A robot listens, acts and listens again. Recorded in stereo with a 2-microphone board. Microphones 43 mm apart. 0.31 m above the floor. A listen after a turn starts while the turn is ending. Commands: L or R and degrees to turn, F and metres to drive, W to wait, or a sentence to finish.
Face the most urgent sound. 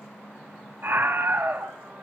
R55
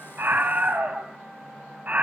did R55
R45
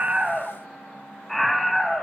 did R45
Facing the scream, 1 to 2 m away.